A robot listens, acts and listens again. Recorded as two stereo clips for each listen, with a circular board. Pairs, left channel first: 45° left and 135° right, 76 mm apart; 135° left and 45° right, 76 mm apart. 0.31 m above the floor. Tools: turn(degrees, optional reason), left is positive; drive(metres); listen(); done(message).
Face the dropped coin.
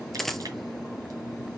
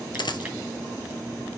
turn(degrees=130, reason="The dropped coin: 130° left.")
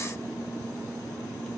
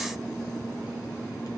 done("Facing where the dropped coin came from. I can't hear it now.")